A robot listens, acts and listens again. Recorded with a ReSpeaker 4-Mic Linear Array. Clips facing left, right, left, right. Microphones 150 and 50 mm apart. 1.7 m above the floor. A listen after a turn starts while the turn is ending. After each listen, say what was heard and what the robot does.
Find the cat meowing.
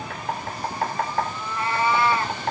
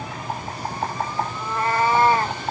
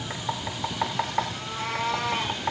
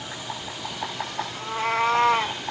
The cat meowing: about 45° right or 135° right. Turn 45° right.
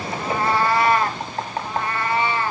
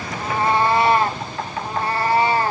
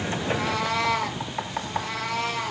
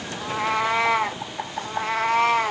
The cat meowing: about 40° right or 140° right. Turn 40° right.
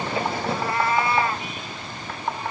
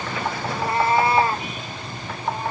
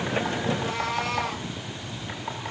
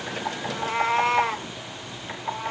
The cat meowing: about 40° right or 140° right. Turn 40° right.
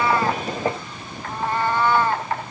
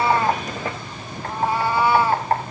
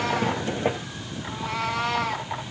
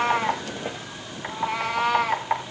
So it is at 10° right. Turn 10° right.
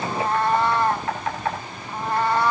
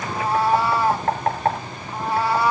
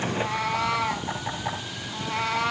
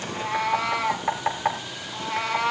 Found it: a cat meowing, straight ahead, 1 to 2 m away.